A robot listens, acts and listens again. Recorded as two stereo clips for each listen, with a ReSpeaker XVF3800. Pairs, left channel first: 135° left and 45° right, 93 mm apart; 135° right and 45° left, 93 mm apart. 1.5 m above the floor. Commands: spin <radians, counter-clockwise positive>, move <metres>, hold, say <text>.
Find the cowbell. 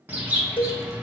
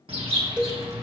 spin 2.09
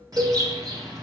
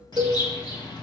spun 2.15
say Facing the cowbell.